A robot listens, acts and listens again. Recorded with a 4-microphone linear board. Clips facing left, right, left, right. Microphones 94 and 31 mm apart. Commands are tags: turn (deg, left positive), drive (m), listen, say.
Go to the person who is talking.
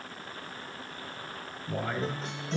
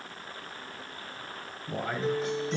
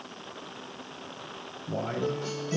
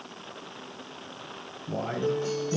<turn deg="-30"/>
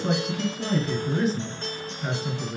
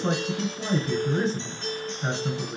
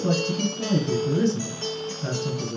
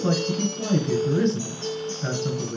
<turn deg="-145"/>
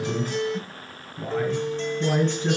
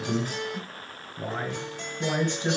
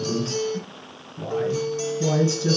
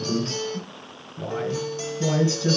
<turn deg="-20"/>
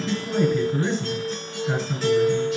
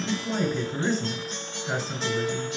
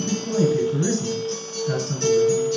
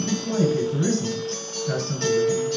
<turn deg="-10"/>
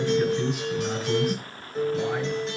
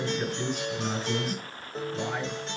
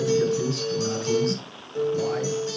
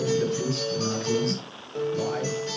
<drive m="1.0"/>
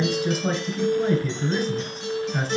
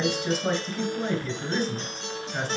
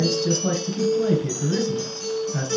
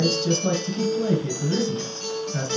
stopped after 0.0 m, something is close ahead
<say>Blocked. The man speaking is further on, straight ahead.</say>